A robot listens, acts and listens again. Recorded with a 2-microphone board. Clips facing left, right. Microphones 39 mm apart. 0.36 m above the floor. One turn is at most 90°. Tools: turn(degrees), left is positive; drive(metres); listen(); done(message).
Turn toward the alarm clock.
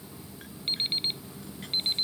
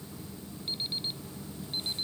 turn(degrees=55)
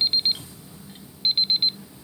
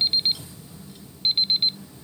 done("Facing the alarm clock.")